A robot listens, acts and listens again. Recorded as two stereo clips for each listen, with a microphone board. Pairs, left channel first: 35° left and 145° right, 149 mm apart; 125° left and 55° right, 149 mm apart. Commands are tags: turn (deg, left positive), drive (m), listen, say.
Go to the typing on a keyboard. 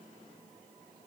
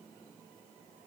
<listen/>
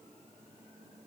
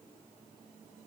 <listen/>
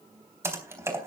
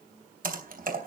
<turn deg="-75"/>
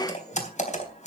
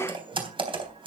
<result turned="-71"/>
<drive m="1.0"/>
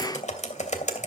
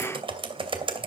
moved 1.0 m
<drive m="1.0"/>
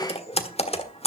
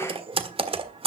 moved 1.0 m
<turn deg="-10"/>
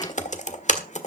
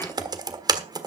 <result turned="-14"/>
<drive m="1.0"/>
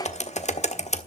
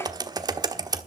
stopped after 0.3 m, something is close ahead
<say>Arrived at the typing on a keyboard, straight ahead.</say>